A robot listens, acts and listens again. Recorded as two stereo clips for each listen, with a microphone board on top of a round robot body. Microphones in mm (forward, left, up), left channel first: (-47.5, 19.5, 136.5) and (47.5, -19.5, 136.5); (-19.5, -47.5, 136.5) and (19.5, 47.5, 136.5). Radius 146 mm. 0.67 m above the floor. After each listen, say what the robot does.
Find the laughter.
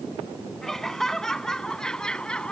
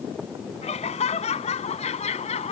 Turn 120° right.
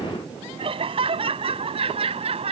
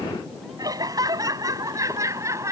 Found it: laughter, straight ahead.